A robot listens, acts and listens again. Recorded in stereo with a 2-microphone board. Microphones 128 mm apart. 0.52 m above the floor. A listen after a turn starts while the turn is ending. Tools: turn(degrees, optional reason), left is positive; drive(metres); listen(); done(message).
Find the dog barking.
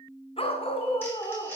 turn(degrees=45, reason="The dog barking: about 45° left or 135° left.")
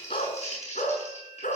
turn(degrees=90, reason="So it is at 90° left.")
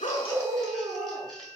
turn(degrees=-25, reason="The dog barking is now 25° right.")
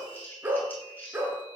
turn(degrees=-15, reason="The dog barking is now 15° right.")
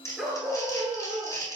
done("Facing the dog barking, 2 to 4 m away.")